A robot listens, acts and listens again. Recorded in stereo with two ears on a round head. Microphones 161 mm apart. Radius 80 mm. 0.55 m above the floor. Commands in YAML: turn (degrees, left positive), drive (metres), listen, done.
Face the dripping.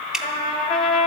turn: -30
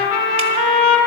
listen: true
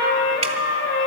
listen: true
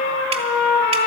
done: "I heard dripping, but can't make it out now. It was about 25° left or 145° right."